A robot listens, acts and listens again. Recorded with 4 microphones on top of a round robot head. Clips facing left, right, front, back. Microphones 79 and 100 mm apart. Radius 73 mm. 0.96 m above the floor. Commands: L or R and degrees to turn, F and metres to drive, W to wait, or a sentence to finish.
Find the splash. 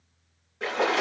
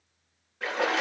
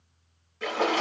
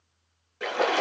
L165
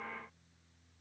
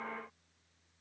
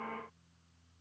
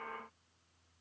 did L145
L20
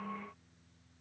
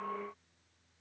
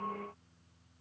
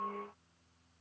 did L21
I heard a splash from this way, but can't make it out now.